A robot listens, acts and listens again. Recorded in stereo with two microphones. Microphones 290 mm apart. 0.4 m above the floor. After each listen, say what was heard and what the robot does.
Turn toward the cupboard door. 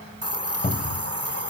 The cupboard door: about 25° left or 155° left. Turn 25° left.
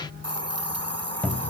Found it: a cupboard door, straight ahead, 1 to 2 m away.